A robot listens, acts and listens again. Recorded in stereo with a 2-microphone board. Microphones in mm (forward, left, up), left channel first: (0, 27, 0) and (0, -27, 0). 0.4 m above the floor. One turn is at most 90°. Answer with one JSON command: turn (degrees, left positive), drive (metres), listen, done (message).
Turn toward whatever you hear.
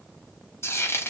{"turn": 60}
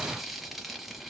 {"done": "Found it: frying, straight ahead, under 1 m away."}